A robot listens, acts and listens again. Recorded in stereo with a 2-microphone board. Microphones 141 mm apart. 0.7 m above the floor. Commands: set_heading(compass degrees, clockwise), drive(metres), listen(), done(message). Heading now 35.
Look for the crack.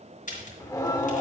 set_heading(325)
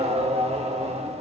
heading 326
listen()
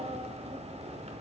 done("I heard a crack, but can't make it out now. It was about straight ahead or 45° left.")